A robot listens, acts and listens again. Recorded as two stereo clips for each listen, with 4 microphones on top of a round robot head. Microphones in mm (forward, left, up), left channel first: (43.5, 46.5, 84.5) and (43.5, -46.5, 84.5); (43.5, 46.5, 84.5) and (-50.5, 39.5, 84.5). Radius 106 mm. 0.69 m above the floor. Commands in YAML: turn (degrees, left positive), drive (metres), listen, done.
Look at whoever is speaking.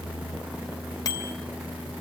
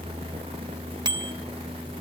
listen: true
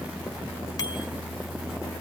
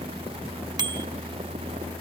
listen: true
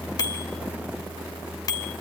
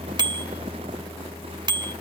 done: "I can't make out anyone speaking to turn to."